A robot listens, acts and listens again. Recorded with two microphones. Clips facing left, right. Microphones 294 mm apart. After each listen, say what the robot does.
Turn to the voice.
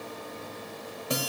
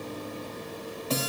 Keep listening.
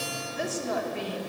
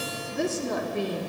Turn 50° right.
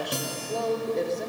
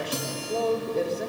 Facing the woman speaking, 1 to 2 m away.